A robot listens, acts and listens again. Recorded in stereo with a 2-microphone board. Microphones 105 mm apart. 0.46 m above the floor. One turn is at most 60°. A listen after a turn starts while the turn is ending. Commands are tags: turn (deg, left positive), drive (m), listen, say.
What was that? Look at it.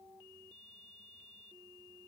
<listen/>
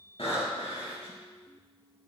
<turn deg="60"/>
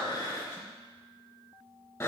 <turn deg="30"/>
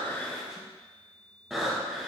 <say>Facing the breathing, 2 to 4 m away.</say>